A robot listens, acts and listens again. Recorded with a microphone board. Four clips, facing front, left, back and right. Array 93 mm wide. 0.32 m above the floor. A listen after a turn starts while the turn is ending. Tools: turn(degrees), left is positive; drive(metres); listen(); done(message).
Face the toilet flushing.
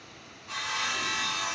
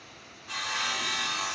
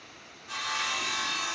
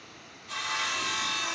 listen()
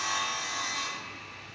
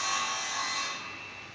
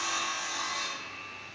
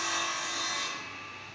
listen()
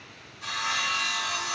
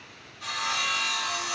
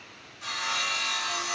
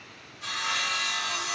done("I can't make out a toilet flushing, only sawing.")